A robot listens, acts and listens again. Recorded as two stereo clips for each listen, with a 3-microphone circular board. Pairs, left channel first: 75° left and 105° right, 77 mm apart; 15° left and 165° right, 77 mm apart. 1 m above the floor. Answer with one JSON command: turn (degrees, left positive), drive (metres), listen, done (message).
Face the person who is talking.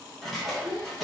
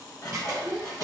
{"turn": 120}
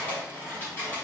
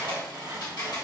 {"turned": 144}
{"turn": -25}
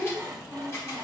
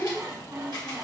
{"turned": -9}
{"turn": -15}
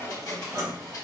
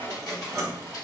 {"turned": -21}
{"listen": true}
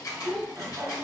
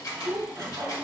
{"done": "Found it: a child speaking, straight ahead, 1 to 2 m away."}